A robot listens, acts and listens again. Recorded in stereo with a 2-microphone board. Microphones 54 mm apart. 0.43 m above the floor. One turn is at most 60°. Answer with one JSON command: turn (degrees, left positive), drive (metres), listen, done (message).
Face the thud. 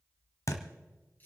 {"turn": 60}
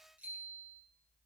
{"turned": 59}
{"listen": true}
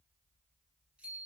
{"done": "I heard a thud, but can't make it out now. It was about 10° left or 50° left."}